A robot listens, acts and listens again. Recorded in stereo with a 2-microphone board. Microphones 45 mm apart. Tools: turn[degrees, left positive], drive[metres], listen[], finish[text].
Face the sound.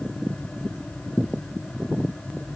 Action: listen[]
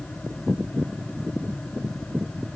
Action: listen[]
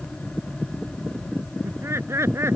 Action: turn[-90]
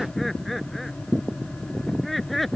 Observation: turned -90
Action: finish[Found it: laughter, straight ahead.]